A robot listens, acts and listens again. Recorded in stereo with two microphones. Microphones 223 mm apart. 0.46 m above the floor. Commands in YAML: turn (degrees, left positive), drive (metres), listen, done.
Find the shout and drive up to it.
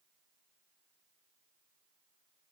listen: true
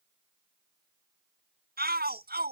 turn: -45
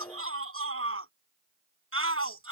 turn: -85
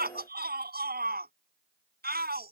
turn: -45
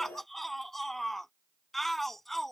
drive: 1.0
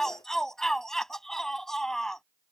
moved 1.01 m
drive: 1.0
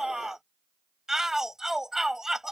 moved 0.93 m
drive: 1.0
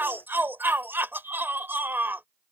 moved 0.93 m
turn: -10
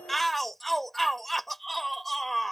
drive: 1.0
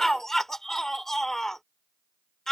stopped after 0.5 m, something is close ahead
done: "Arrived at the shout, straight ahead."